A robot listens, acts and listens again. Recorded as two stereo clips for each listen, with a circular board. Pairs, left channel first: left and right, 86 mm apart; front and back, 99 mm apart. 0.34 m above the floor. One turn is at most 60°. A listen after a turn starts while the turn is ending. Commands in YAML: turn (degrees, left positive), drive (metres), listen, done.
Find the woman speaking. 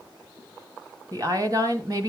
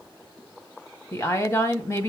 turn: -55
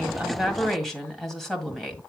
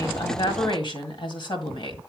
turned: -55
done: "Facing the woman speaking, 1 to 2 m away."